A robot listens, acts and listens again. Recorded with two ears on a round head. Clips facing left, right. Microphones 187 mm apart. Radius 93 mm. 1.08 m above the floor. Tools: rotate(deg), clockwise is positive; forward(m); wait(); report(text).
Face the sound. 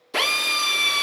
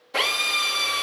rotate(-60)
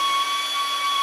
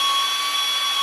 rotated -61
report("Facing the drill.")